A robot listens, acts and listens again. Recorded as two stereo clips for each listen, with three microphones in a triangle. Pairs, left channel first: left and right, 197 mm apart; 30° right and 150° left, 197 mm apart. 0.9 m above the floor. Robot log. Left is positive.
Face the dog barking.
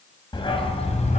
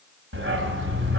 note: The dog barking: 145° left.
cmd yaw +145
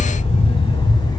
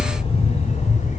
note: The dog barking is now 20° left.
cmd yaw +20
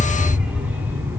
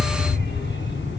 note: The dog barking is now 10° right.
cmd yaw -10
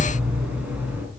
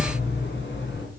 note: The dog barking is now 10° right.
cmd yaw -10
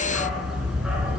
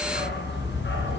end: Found it: a dog barking, straight ahead.